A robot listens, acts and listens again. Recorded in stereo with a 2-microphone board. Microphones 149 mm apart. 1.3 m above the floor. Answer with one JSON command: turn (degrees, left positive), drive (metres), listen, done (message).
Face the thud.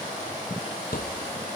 {"turn": 90}
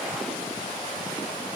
{"done": "Facing where the thud came from. I can't hear it now."}